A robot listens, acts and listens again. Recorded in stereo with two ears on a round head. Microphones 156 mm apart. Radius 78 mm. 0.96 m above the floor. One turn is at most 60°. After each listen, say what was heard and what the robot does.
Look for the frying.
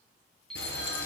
The frying: about 70° left or 110° left. Turn 60° left.
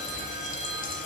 So it is at 50° left. Turn 50° left.
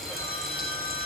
Facing the frying, over 4 m away.